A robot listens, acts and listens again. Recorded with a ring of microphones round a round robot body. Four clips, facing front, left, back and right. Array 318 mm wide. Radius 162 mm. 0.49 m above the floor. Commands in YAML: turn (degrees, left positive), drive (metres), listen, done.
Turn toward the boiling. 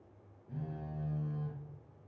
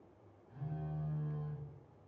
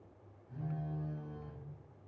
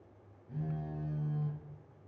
listen: true
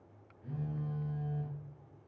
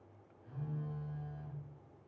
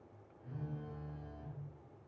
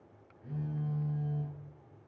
listen: true
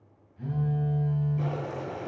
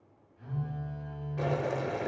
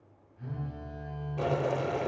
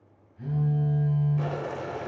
turn: 150
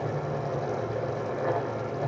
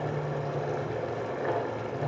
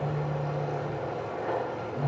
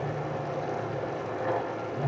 turn: 20
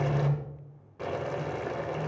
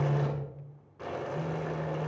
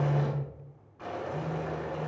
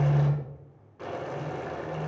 done: "Facing the boiling."